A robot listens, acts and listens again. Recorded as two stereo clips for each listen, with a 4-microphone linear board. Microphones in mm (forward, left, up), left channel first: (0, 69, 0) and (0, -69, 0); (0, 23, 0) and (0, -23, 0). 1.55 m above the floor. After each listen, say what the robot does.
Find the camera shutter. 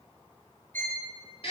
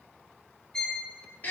Keep listening.
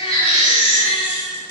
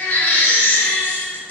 Keep listening.
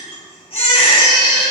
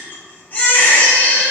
I can't make out a camera shutter to turn to.